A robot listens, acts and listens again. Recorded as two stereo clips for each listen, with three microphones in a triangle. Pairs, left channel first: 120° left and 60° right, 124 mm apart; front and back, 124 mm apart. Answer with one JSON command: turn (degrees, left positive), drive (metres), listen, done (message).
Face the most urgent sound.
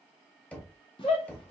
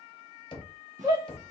{"turn": 130}
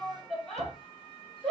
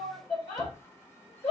{"turn": 30}
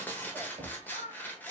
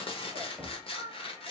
{"listen": true}
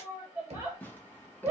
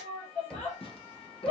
{"done": "Facing the shout."}